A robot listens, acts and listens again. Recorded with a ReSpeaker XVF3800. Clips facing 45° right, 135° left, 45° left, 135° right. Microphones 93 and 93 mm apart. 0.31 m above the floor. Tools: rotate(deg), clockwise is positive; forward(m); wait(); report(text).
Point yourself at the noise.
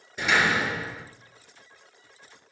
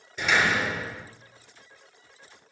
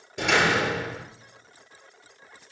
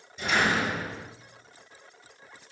rotate(-30)
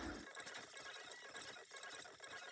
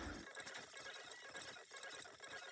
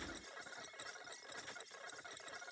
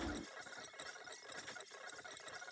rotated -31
report("I heard a door slam from this way, but can't make it out now.")